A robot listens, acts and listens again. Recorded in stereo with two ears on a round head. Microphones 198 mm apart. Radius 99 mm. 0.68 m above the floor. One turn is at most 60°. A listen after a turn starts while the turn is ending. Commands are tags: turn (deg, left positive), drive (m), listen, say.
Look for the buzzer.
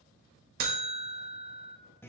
<turn deg="-45"/>
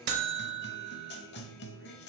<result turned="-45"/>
<turn deg="-60"/>
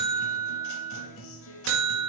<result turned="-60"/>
<turn deg="-55"/>
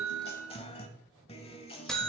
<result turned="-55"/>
<say>Facing the buzzer, 1 to 2 m away.</say>